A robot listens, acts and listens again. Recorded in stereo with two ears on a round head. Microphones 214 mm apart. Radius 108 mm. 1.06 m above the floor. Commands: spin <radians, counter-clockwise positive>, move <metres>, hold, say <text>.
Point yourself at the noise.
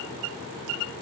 hold
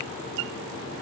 hold
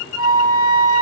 spin 1.05
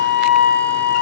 say Found it: a flute, straight ahead, 2 to 4 m away.